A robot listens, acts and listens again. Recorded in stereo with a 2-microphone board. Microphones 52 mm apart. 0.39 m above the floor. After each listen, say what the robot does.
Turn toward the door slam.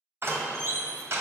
Turn 55° right.
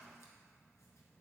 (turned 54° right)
Keep listening.
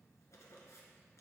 I heard a door slam, but can't make it out now. It was about straight ahead or 70° right.